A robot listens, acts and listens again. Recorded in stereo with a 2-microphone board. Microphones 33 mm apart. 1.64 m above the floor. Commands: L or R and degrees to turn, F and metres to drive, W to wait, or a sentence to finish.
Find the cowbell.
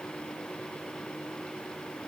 W
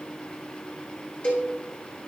L50
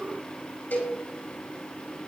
L80
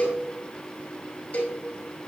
L40
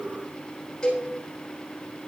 L25
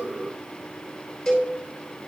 L10
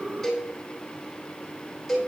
Found it: a cowbell, straight ahead, 2 to 4 m away.